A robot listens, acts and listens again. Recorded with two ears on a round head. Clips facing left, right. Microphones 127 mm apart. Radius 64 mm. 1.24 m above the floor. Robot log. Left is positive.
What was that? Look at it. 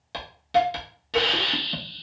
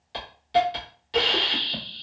note: The hiss: about 60° left or 120° left.
cmd yaw +60
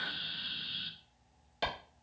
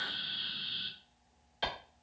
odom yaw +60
note: So it is at 60° left.
cmd yaw +60
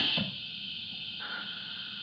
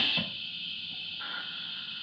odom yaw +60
end: Facing the hiss, under 1 m away.